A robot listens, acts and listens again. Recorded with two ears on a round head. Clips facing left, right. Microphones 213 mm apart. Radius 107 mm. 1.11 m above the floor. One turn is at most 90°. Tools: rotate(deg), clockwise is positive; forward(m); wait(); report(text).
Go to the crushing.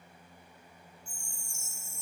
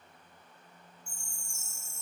wait()
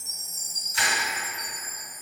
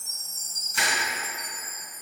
rotate(50)
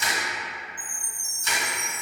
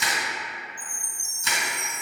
rotate(75)
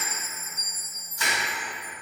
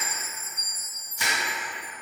rotate(15)
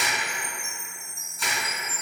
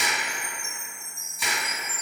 forward(1.0)
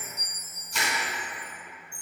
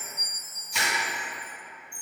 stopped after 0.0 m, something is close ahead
report("Something is in my way. I am facing the crushing but have not reached it.")